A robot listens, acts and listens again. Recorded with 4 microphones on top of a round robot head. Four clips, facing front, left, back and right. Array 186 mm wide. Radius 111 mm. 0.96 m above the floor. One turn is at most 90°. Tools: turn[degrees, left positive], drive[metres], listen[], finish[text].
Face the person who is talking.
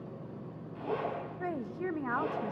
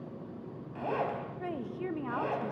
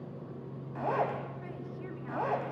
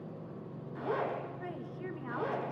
Thought: The woman speaking: 35° left.
Action: turn[35]
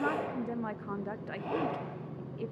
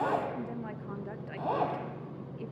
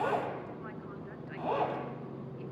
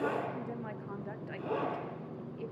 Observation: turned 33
Action: finish[Facing the woman speaking.]